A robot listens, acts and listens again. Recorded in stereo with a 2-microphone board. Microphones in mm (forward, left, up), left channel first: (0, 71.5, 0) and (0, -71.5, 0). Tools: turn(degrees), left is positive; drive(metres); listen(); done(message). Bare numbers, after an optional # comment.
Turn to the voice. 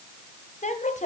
# The woman speaking: about 55° left or 125° left.
turn(55)
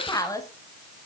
# So it is at 30° left.
turn(30)
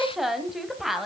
done("Facing the woman speaking.")